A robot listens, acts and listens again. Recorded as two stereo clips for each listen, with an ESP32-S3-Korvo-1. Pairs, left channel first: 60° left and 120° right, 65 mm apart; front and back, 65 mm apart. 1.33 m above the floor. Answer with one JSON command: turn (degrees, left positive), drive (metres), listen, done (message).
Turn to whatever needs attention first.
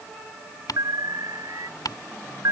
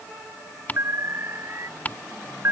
{"turn": -135}
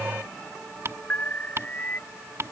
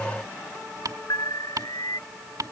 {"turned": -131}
{"done": "Found it: an alarm, straight ahead."}